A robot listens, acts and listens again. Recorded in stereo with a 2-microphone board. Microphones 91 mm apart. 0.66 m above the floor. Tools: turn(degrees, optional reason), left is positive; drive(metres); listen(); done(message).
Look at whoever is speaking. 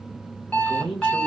turn(degrees=70, reason="The man speaking: about 70° left or 110° left.")
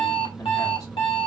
listen()
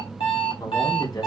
turn(degrees=45, reason="So it is at 45° left.")
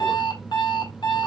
listen()
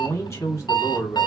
turn(degrees=40, reason="The man speaking is now 40° left.")
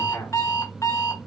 turn(degrees=25, reason="The man speaking is now 25° left.")
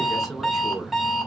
done("Found it: a man speaking, straight ahead.")